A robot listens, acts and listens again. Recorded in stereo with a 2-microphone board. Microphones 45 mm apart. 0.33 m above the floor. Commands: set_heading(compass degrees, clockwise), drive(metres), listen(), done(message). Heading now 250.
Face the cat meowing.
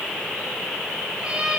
set_heading(270)
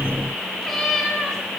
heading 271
done("Found it: a cat meowing, straight ahead, over 4 m away.")